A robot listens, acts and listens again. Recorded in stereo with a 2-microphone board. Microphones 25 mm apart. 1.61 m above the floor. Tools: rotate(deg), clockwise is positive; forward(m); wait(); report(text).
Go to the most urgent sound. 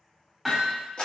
wait()
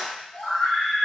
rotate(-90)
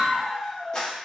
forward(1.0)
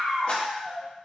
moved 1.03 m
rotate(15)
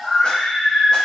forward(1.0)
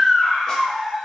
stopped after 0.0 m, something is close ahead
report("I am next to the scream.")